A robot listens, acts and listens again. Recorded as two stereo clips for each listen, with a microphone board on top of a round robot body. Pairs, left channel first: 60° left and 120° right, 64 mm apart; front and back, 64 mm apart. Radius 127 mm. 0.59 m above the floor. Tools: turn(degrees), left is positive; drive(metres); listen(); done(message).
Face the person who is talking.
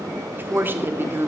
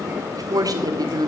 turn(degrees=-175)
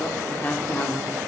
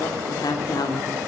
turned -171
done("Found it: a woman speaking, straight ahead, 1 to 2 m away.")